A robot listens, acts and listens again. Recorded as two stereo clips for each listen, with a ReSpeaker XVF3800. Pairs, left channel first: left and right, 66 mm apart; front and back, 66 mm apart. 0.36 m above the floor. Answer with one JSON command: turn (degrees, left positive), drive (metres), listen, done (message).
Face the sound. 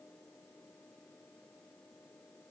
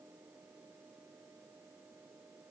{"listen": true}
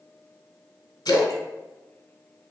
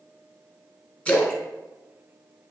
{"turn": 75}
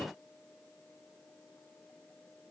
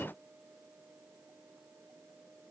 {"done": "Facing where the splash came from. I can't hear it now."}